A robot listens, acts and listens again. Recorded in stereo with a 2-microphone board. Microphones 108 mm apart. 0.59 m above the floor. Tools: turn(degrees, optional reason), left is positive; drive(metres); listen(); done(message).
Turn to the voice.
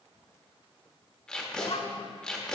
turn(degrees=65, reason="The child speaking: about 65° left or 115° left.")
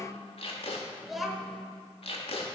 done("Found it: a child speaking, straight ahead, 1 to 2 m away.")